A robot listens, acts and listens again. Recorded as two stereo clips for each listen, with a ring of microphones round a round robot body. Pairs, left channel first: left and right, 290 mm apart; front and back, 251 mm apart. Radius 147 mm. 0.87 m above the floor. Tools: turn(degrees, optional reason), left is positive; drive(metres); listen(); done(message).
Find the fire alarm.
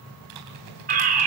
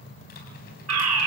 turn(degrees=-150, reason="The fire alarm: 150° right.")
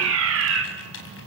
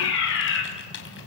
turn(degrees=-45, reason="The fire alarm is now 45° right.")
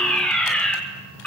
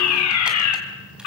done("Facing the fire alarm.")